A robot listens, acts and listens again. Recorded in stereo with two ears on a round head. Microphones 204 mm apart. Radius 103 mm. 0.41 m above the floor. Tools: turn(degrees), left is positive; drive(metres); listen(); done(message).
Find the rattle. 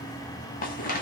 turn(degrees=40)
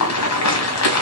turn(degrees=100)
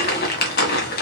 turn(degrees=40)
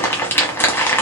turn(degrees=10)
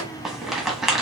done("Found it: a rattle, straight ahead.")